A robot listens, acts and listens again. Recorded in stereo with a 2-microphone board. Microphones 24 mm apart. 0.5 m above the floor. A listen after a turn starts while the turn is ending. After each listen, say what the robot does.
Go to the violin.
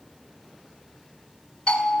Keep listening.
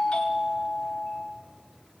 Keep listening.
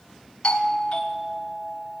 I can't make out a violin, only a doorbell.